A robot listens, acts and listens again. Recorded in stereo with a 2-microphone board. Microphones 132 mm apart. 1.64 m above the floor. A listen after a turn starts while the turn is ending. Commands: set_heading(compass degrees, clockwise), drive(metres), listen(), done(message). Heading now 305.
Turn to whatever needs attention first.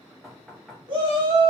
set_heading(345)
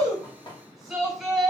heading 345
done("Found it: a shout, straight ahead, 1 to 2 m away.")